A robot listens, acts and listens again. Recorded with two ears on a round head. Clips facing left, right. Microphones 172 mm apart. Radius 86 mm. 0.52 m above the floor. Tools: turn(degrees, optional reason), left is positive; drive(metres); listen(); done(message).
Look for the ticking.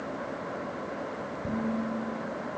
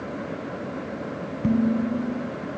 listen()
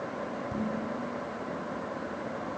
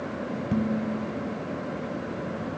listen()
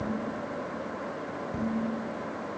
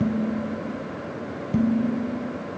done("I can't make out ticking, only dishes clattering.")